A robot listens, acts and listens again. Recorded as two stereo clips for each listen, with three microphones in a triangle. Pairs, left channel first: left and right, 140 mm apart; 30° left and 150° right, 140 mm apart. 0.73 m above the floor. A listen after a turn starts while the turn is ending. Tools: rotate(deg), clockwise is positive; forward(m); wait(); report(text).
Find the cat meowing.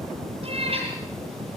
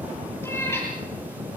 rotate(45)
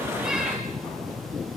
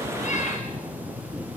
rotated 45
wait()
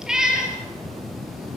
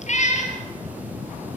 report("Facing the cat meowing, over 4 m away.")